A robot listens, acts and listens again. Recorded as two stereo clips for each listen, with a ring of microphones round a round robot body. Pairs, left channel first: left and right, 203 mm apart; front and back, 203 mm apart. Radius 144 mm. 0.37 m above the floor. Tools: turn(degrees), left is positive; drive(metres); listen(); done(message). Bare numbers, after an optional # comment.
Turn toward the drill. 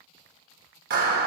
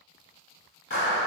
listen()
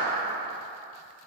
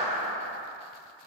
listen()
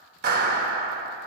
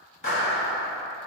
done("I can't make out a drill to turn to.")